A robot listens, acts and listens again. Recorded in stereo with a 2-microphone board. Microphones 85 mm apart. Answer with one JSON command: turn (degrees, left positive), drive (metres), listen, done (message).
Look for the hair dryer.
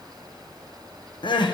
{"listen": true}
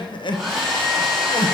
{"turn": 30}
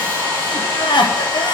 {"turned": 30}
{"turn": 145}
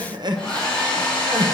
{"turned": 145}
{"turn": 10}
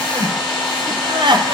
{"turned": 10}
{"done": "Facing the hair dryer."}